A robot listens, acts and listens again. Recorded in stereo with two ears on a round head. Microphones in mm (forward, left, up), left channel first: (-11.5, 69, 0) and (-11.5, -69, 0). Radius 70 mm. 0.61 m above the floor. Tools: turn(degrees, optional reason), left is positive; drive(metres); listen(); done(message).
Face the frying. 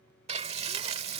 turn(degrees=-40, reason="The frying: about 40° right or 140° right.")
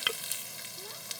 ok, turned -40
done("Facing the frying.")